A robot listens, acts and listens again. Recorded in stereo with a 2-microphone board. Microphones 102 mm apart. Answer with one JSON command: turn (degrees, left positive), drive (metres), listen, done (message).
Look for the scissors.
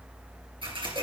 {"turn": -60}
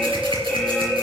{"listen": true}
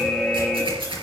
{"turn": -60}
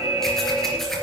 {"listen": true}
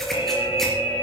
{"listen": true}
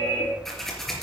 {"done": "Facing the scissors, 2 to 4 m away."}